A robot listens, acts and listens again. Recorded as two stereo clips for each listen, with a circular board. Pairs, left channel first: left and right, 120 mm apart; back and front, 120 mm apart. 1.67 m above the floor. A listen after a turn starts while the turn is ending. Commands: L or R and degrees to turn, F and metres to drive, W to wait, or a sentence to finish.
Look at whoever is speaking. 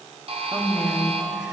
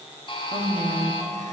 Found it: a woman speaking, straight ahead, 1 to 2 m away.